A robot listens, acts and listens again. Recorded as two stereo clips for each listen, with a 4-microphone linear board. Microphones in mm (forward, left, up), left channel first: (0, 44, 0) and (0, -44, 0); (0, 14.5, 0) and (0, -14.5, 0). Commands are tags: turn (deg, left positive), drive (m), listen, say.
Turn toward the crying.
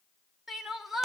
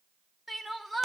<turn deg="-30"/>
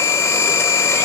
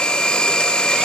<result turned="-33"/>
<listen/>
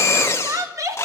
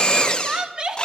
<turn deg="-145"/>
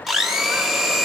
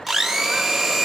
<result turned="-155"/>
<turn deg="10"/>
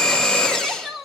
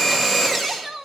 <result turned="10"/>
<say>Facing the crying.</say>